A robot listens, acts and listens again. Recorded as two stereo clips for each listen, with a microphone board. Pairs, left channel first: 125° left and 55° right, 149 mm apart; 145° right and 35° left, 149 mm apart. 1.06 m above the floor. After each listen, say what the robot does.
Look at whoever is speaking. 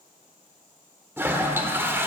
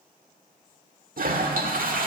Keep listening.
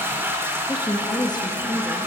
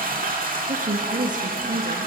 Turn 65° left.
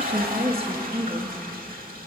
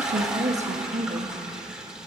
Facing the woman speaking.